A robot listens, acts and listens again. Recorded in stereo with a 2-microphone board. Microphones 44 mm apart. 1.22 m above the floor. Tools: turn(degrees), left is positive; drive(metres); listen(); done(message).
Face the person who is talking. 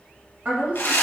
turn(degrees=-35)
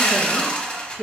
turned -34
done("Found it: a woman speaking, straight ahead, 1 to 2 m away.")